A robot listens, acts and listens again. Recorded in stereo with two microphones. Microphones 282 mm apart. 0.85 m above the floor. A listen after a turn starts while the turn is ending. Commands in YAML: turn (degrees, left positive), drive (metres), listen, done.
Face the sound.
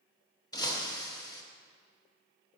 turn: 30
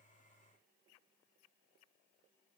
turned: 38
listen: true
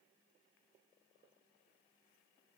done: "I heard breaking glass, but can't make it out now. It was about 25° right or 130° left."